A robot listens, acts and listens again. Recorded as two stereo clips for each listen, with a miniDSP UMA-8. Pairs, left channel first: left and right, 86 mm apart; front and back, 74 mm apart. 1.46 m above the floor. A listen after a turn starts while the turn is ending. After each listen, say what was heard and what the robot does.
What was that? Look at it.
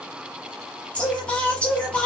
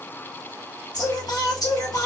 The singing: 15° left. Turn 15° left.
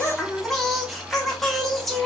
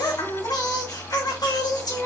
Facing the singing, under 1 m away.